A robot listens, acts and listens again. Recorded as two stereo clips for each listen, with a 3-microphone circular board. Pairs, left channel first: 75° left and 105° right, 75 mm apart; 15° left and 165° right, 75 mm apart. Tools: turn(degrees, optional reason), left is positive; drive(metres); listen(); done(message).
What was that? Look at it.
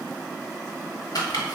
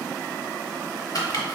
turn(degrees=45, reason="The chopping: 45° left.")
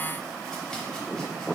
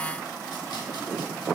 listen()
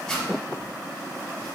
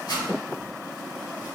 done("Facing the chopping, under 1 m away.")